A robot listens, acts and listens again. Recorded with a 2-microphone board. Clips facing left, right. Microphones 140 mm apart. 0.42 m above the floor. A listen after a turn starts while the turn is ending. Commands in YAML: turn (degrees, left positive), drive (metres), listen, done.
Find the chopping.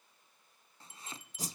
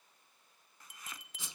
turn: 30
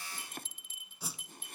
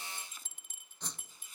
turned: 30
turn: 120
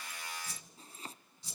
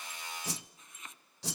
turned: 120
turn: 35
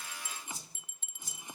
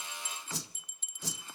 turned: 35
listen: true
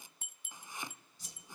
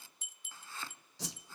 turn: 15
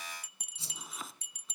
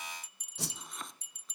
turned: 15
done: "Facing the chopping, under 1 m away."